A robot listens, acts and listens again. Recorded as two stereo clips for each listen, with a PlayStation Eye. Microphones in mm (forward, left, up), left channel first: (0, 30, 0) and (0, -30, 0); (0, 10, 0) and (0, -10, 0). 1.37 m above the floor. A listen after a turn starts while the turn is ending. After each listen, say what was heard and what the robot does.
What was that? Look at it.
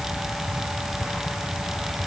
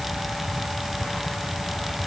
Keep listening.
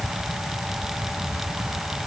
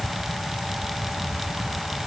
Keep listening.
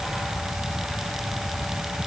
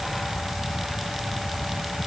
I can't make out anything.